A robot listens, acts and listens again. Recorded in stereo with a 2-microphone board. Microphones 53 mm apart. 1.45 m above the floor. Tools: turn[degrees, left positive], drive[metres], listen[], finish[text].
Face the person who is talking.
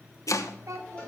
Action: turn[-90]
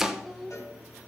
Action: finish[Found it: a child speaking, straight ahead, 2 to 4 m away.]